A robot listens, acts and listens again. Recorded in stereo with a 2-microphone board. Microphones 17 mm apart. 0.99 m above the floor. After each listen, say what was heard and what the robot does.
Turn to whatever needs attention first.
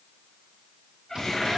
Keep listening.
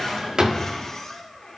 Keep listening.
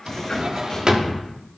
I can't make out anything urgent to turn to.